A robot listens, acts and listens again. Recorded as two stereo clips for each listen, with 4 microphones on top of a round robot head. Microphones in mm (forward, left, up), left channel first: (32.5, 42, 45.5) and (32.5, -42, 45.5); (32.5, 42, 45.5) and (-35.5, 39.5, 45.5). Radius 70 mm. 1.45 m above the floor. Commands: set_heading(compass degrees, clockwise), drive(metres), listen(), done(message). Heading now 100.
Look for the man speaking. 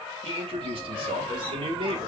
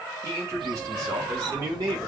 set_heading(225)
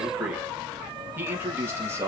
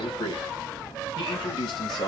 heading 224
set_heading(254)
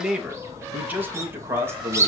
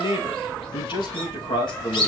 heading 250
set_heading(275)
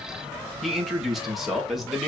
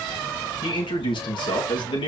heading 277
done("Facing the man speaking.")